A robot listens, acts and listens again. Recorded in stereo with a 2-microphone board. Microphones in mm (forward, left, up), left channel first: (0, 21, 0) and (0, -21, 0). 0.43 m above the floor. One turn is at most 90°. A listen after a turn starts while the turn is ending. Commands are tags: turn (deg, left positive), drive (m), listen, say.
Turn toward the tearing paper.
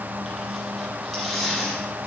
<turn deg="-30"/>
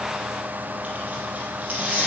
<turn deg="-90"/>
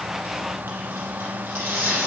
<turn deg="-65"/>
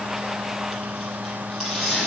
<turn deg="10"/>
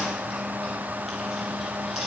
<listen/>
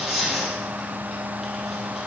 <say>Found it: tearing paper, straight ahead.</say>